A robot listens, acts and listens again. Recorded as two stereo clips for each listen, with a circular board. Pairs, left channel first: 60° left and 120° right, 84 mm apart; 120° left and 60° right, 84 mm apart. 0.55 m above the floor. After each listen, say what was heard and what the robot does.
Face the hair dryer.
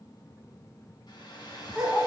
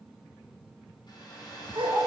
The hair dryer: 90° left. Turn 90° left.
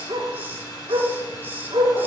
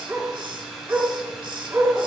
The hair dryer is now 25° left. Turn 25° left.
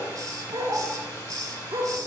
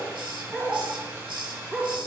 Found it: a hair dryer, straight ahead, 1 to 2 m away.